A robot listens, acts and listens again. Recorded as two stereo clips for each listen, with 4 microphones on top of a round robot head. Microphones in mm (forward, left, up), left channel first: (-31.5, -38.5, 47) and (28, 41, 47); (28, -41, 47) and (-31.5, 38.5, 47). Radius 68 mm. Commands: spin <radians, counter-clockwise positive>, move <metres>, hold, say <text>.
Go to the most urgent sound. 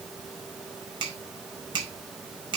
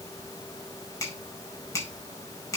hold
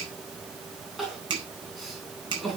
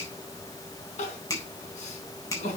spin -0.61
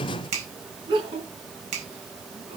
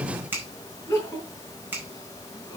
spin 0.17
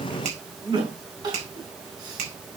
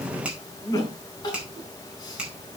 move 1.0
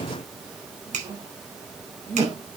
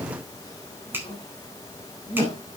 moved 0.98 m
move 1.0
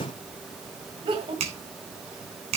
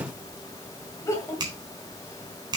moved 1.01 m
spin 0.17
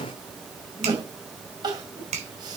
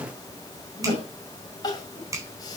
move 1.0
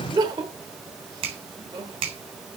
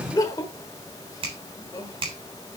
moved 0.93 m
move 1.0
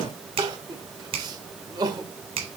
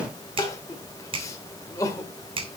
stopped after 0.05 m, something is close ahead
say I am next to the crying.